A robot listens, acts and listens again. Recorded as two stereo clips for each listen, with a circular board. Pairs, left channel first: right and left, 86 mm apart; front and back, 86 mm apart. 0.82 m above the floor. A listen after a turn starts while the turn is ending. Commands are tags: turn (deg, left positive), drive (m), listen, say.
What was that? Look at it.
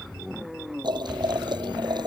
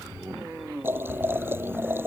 <turn deg="115"/>
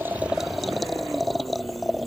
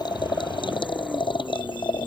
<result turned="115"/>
<say>Found it: boiling, straight ahead.</say>